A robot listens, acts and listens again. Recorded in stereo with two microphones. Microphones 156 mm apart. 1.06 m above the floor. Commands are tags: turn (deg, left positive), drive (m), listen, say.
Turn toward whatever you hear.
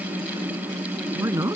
<turn deg="-20"/>
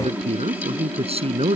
<turn deg="-140"/>
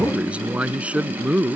<say>Found it: a man speaking, straight ahead.</say>